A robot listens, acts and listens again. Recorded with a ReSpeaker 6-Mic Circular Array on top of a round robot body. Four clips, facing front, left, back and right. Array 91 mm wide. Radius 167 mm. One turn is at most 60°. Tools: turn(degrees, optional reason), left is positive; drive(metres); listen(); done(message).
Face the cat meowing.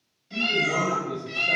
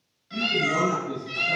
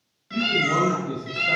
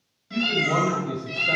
turn(degrees=60, reason="The cat meowing: 175° left.")
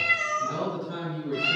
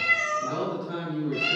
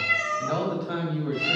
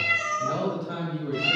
turn(degrees=60, reason="The cat meowing is now 100° left.")
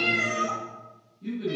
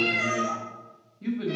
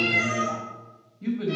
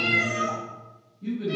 turn(degrees=35, reason="The cat meowing is now 35° left.")
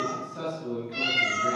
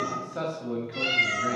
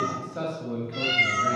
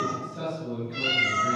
turn(degrees=10, reason="The cat meowing is now 10° left.")
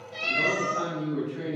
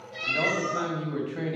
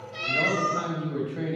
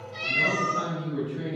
done("Found it: a cat meowing, straight ahead.")